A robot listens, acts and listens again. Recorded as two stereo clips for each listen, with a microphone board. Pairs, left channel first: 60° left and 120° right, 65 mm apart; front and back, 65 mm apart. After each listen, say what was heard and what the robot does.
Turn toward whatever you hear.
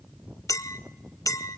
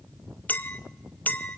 The clink: 55° left. Turn 55° left.
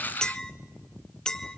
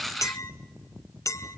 The clink is now 15° right. Turn 15° right.
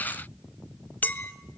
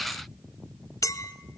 Found it: a clink, straight ahead, under 1 m away.